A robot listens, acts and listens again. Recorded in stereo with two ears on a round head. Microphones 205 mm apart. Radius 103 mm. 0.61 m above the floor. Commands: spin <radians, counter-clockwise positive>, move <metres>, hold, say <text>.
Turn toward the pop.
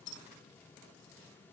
hold
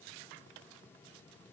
hold
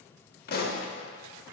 spin 0.79
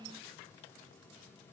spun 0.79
hold
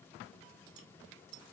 say I heard a pop, but can't make it out now. It was about straight ahead or 90° left.